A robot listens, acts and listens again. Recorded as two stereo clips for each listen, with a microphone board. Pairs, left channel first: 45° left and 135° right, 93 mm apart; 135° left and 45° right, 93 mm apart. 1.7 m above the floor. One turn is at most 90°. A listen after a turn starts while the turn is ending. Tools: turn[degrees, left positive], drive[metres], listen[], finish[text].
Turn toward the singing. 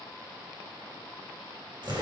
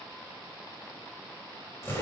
Action: listen[]
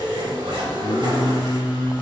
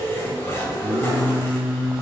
Thought: The singing: 30° left.
Action: turn[30]
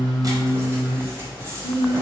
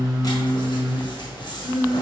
Thought: The singing is now 25° left.
Action: turn[25]
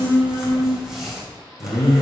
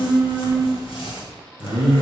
Thought: The singing is now 15° left.
Action: turn[15]
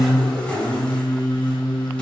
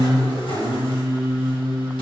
Action: finish[Facing the singing.]